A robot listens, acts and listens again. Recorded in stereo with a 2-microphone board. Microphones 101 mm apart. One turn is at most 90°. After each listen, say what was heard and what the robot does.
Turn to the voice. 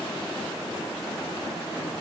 Keep listening.
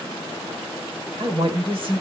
The woman speaking: about 55° right or 125° right. Turn 55° right.
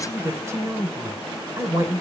So it is at 35° right. Turn 35° right.
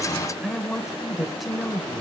Found it: a woman speaking, straight ahead, 1 to 2 m away.